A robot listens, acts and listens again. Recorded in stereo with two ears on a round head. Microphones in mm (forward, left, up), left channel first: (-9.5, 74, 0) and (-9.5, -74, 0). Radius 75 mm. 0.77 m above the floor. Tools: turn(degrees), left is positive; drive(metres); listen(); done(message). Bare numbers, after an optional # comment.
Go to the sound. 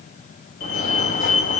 # The fire alarm: about 55° left or 125° left.
turn(55)
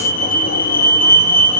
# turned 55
# So it is at 65° left.
turn(65)
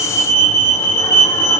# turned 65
# The fire alarm is now 20° left.
turn(20)
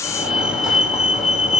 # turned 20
drive(1.0)
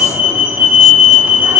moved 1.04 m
# The fire alarm is now 10° right.
turn(-10)
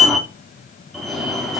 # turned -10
drive(1.0)
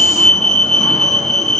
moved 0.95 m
drive(1.0)
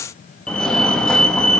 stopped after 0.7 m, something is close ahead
# The fire alarm is now 10° left.
turn(10)
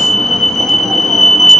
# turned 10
done("Arrived at the fire alarm, straight ahead.")